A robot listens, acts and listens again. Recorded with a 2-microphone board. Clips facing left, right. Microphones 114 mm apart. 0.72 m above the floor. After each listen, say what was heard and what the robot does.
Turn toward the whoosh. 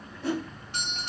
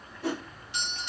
The whoosh: about 60° right or 120° right. Turn 60° right.
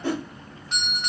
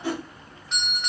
So it is at 15° right. Turn 15° right.
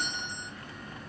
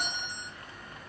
Keep listening.
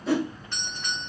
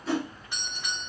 Facing the whoosh, 2 to 4 m away.